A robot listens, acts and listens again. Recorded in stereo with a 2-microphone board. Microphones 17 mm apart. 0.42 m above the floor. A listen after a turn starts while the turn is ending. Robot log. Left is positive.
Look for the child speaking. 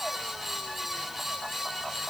cmd idle
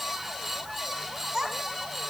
note: The child speaking: about 25° right or 155° right.
cmd yaw -25
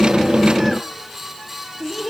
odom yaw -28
note: So it is at 10° left.
cmd yaw +10
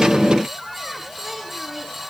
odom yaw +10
end: Facing the child speaking.